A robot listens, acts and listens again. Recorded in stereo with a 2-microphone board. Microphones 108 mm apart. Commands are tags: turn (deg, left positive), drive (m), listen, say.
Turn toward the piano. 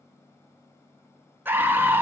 <listen/>
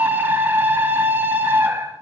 <listen/>
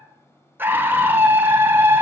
<say>I can't make out a piano to turn to.</say>